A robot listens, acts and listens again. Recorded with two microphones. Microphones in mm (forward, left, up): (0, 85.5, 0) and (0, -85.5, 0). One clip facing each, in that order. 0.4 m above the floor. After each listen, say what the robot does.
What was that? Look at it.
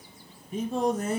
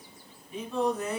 Turn 45° left.
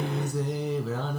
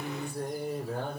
Turn 90° left.
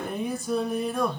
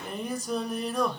Found it: singing, straight ahead.